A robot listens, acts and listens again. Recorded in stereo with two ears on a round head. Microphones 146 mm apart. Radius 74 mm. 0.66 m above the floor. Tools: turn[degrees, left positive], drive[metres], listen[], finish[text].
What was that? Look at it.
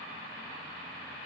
Action: listen[]
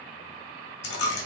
Action: turn[90]
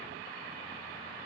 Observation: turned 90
Action: finish[Facing where the dropped coin came from. I can't hear it now.]